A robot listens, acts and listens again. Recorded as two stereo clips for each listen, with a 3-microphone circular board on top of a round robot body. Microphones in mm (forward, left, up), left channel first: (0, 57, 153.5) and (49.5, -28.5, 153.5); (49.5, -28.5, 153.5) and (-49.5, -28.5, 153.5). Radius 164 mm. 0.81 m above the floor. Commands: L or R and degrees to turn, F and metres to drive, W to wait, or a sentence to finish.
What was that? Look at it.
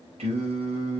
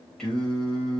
R85
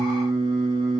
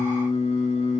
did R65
R20
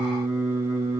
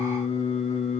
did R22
Facing the singing, over 4 m away.